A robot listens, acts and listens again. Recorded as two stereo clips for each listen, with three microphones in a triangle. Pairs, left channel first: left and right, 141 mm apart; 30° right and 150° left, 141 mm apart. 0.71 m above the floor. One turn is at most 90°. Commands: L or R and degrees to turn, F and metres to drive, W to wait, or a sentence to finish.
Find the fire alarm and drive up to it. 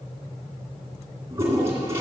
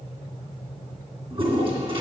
W
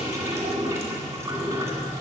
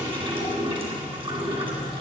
W
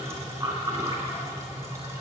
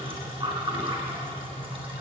I can't make out a fire alarm to turn to.